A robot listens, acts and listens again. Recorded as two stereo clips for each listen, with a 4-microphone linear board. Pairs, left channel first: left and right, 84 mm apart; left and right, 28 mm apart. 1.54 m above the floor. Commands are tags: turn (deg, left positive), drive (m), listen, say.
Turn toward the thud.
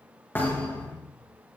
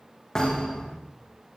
<turn deg="20"/>
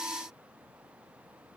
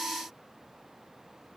<listen/>
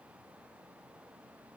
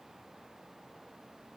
<say>I heard a thud, but can't make it out now. It was about straight ahead or 140° left.</say>